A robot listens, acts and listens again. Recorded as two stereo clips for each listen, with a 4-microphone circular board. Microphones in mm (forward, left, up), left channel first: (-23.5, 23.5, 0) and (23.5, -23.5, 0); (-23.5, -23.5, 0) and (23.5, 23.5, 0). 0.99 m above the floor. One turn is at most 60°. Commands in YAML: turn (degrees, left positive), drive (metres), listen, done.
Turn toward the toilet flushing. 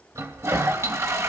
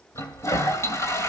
turn: -60
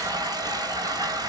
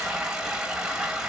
turn: -35
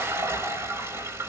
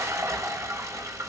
done: "Facing the toilet flushing."